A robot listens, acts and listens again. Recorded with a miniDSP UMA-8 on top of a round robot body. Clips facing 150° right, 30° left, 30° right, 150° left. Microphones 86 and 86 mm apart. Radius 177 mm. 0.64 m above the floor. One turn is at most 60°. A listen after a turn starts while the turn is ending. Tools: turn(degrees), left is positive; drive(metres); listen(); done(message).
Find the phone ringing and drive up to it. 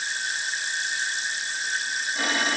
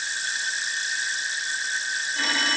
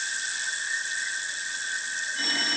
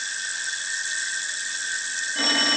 turn(degrees=60)
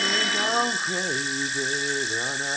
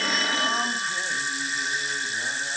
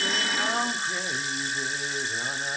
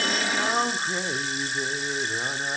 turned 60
turn(degrees=60)
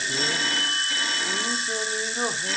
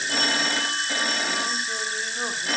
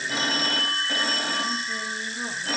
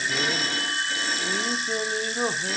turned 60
drive(metres=1.0)
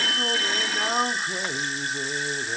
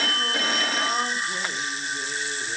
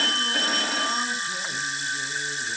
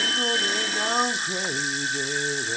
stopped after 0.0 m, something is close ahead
done("Blocked. The phone ringing is further on, straight ahead.")